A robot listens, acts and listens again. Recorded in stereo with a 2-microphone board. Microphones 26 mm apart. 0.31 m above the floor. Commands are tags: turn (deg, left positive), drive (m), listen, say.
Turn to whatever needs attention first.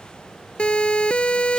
<turn deg="40"/>
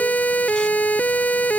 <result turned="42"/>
<turn deg="95"/>
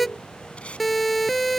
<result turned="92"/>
<say>Found it: a siren, straight ahead.</say>